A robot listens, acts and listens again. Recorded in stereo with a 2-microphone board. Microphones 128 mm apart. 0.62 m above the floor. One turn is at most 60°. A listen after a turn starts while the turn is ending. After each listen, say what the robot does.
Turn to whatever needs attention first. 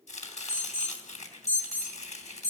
Turn 25° right.
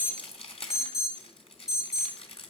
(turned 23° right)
Found it: an alarm, straight ahead, 2 to 4 m away.